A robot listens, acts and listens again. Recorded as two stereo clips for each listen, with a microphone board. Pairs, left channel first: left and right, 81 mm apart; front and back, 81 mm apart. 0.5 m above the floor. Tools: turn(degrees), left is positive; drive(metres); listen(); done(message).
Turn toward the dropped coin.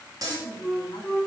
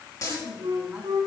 turn(degrees=-45)
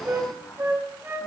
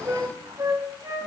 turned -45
done("I heard a dropped coin from this way, but can't make it out now.")